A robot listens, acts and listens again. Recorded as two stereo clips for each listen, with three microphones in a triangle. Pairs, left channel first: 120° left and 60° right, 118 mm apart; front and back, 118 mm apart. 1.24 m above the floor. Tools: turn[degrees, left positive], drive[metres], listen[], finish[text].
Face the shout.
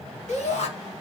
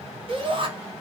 Thought: The shout: 140° left.
Action: turn[140]
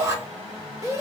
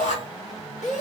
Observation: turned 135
Action: finish[Facing the shout.]